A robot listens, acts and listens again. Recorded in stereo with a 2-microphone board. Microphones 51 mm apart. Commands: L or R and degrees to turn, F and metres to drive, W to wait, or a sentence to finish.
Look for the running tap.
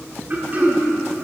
W
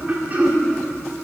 W
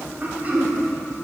I can't make out a running tap, only throat clearing.